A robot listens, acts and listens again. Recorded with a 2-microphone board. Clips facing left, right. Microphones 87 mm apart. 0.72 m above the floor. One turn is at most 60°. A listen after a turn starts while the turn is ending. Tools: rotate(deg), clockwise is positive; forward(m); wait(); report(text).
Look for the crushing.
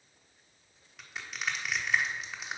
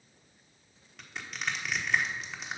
rotate(-30)
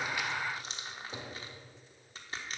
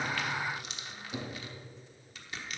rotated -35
rotate(-60)
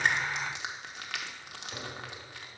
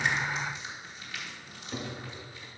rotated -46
rotate(-60)
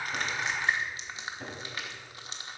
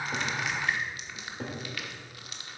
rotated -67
rotate(-30)
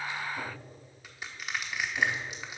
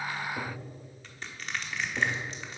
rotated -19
rotate(-10)
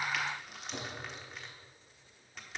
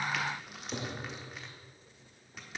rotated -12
report("Facing the crushing, 1 to 2 m away.")